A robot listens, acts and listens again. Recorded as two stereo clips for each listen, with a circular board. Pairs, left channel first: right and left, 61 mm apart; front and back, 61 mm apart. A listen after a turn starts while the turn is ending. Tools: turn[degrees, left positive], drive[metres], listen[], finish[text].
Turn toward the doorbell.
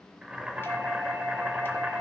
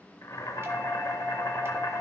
Thought: The doorbell: 140° left.
Action: turn[140]
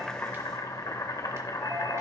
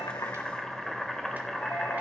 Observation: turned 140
Action: listen[]
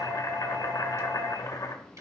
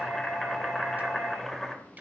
Thought: The doorbell is now 40° left.
Action: turn[40]
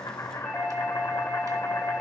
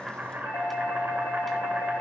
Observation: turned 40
Action: finish[Found it: a doorbell, straight ahead, 2 to 4 m away.]